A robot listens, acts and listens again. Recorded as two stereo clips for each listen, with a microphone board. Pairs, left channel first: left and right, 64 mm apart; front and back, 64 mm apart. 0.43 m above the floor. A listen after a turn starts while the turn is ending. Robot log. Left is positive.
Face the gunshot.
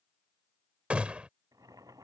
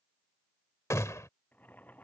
note: The gunshot: 20° right.
cmd yaw -20
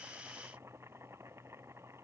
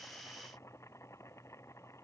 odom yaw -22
end: Facing where the gunshot came from. I can't hear it now.